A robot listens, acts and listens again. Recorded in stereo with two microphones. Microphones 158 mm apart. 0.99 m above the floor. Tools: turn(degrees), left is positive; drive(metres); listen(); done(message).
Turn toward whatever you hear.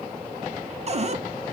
turn(degrees=-45)
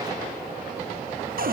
turn(degrees=-90)
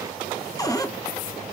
turn(degrees=25)
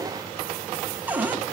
turn(degrees=-10)
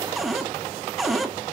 done("Found it: a cupboard door, straight ahead.")